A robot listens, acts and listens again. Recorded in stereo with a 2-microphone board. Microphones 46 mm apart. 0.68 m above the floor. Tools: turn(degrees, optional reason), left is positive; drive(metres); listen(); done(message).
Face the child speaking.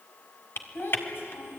turn(degrees=55, reason="The child speaking: about 55° left or 125° left.")
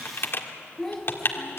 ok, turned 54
done("Facing the child speaking, over 4 m away.")